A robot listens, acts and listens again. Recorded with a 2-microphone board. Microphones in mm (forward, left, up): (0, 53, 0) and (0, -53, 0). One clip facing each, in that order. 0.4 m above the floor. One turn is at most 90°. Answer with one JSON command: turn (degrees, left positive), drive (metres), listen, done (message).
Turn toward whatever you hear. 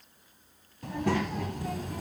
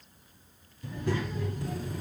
{"turn": 90}
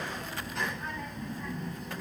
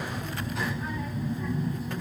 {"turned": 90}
{"done": "Found it: a child speaking, straight ahead."}